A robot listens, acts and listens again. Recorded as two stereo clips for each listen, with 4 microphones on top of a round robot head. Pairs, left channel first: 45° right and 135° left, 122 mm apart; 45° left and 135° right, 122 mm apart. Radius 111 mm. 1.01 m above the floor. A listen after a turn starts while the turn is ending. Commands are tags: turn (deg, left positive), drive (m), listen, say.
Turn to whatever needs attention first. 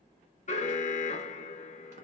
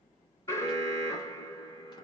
<turn deg="-20"/>
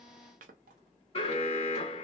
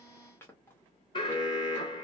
<say>Found it: an alarm, straight ahead, under 1 m away.</say>